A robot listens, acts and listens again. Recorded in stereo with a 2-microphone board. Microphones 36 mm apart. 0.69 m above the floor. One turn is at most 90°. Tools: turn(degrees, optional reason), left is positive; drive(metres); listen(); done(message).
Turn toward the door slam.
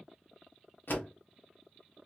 turn(degrees=65, reason="The door slam: about 65° left or 115° left.")
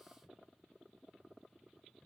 listen()
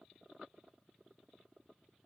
done("I heard a door slam, but can't make it out now. It was about straight ahead or 50° left.")